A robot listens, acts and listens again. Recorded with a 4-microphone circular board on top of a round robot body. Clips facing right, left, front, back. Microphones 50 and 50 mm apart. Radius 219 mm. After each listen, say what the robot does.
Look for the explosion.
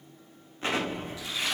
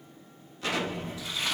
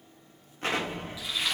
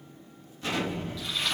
Turn 35° right.
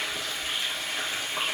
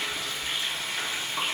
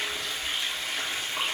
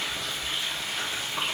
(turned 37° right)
I heard an explosion from this way, but can't make it out now.